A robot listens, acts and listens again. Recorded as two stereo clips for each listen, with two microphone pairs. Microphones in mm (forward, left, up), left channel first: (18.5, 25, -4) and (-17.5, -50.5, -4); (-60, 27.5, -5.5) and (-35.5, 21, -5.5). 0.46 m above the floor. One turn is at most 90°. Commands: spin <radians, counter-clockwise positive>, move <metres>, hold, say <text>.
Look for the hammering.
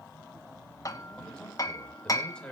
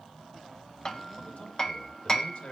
spin 1.57
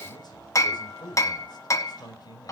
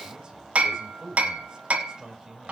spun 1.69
spin 0.26
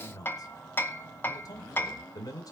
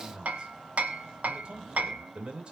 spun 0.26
say Found it: hammering, straight ahead.